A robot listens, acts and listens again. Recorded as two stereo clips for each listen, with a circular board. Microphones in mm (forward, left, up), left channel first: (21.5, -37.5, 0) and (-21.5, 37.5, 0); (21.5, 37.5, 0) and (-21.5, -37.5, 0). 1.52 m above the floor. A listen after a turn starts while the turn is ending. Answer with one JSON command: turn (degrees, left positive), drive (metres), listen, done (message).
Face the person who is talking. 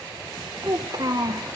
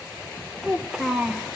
{"turn": 160}
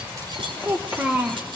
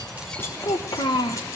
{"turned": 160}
{"turn": 40}
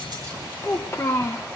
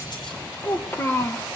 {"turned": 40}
{"done": "Facing the child speaking, 1 to 2 m away."}